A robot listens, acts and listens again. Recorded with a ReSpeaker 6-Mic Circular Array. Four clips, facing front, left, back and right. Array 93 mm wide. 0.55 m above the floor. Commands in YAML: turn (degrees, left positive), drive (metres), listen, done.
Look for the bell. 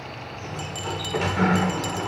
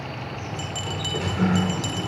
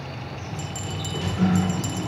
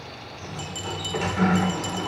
turn: 65
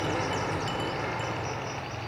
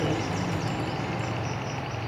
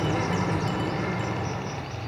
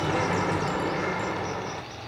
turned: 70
listen: true
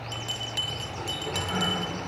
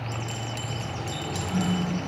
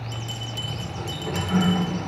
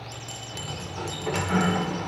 done: "Found it: a bell, straight ahead."